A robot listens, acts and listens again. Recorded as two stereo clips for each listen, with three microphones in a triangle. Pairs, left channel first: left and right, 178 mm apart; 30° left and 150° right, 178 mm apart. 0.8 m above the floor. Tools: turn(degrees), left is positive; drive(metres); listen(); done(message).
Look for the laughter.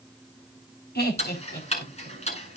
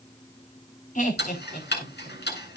turn(degrees=70)
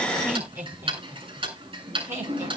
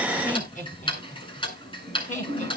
turn(degrees=-15)
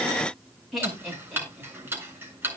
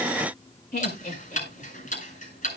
done("Facing the laughter, over 4 m away.")